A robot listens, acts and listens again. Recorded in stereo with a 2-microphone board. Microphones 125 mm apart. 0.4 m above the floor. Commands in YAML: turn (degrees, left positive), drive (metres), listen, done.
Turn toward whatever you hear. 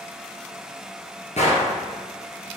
turn: 90
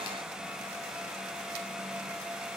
done: "I heard a gunshot from this way, but can't make it out now."